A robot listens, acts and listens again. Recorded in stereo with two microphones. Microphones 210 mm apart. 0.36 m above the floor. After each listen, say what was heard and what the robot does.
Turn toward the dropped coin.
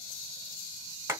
Keep listening.
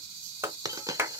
The dropped coin: about 15° right or 165° right. Turn 15° right.
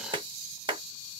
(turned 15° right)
Keep listening.
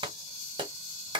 I heard a dropped coin, but can't make it out now. It was about straight ahead or 150° right.